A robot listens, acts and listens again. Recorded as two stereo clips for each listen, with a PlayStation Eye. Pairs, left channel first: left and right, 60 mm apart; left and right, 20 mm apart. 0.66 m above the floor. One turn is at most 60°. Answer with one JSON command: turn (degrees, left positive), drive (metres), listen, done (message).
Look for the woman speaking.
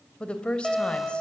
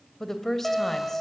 {"turn": 20}
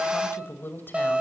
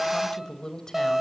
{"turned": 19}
{"turn": 60}
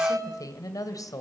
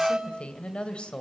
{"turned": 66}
{"turn": 60}
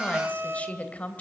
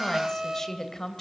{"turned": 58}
{"turn": 25}
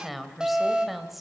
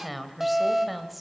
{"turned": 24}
{"done": "Facing the woman speaking, 2 to 4 m away."}